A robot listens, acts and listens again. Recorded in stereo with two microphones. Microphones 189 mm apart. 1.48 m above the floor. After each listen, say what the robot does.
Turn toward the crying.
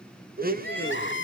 Turn 90° left.
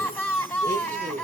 Turn 10° left.
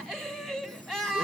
Facing the crying, 2 to 4 m away.